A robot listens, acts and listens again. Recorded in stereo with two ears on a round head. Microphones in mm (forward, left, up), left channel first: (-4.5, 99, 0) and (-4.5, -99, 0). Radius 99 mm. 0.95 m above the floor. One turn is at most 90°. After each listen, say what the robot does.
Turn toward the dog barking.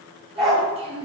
Turn 30° left.
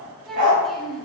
Turn 40° right.
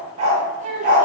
Turn 40° right.
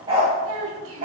Turn 35° right.
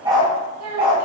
Turn 25° right.
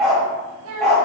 Facing the dog barking, 1 to 2 m away.